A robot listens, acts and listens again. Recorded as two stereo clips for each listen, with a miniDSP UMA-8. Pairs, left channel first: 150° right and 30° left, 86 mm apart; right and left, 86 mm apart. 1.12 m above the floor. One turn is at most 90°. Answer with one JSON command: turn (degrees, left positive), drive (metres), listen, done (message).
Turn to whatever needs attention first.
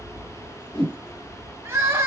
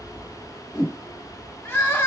{"turn": -25}
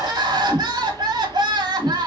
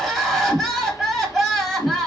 {"done": "Found it: crying, straight ahead."}